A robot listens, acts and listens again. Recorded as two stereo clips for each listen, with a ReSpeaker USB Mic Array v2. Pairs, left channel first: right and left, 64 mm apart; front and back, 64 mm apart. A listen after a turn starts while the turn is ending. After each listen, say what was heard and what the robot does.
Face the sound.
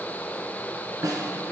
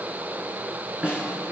The snare drum: 105° left. Turn 105° left.
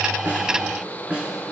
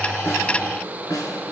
The snare drum is now 15° left. Turn 15° left.
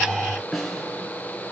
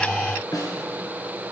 Facing the snare drum, 2 to 4 m away.